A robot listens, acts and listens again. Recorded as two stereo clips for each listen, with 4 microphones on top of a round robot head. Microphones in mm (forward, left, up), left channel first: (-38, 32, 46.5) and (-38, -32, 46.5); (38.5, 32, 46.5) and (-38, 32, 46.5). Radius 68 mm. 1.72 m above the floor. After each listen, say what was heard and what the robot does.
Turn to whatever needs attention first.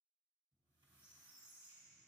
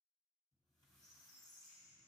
Keep listening.
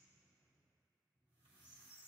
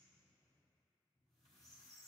Keep listening.
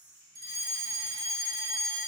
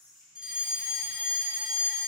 The fire alarm: 100° right. Turn 100° right.
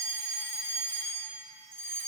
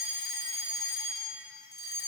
The fire alarm is now 30° left. Turn 30° left.
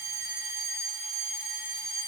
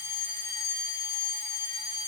Facing the fire alarm, 1 to 2 m away.